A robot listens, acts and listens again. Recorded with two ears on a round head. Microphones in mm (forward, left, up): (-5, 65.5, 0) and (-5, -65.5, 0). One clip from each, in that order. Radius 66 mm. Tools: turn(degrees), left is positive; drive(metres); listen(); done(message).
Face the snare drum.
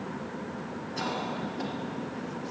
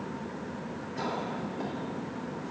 listen()
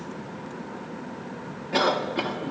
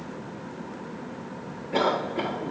listen()
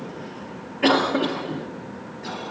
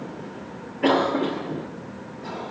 done("I can't make out a snare drum, only a cough.")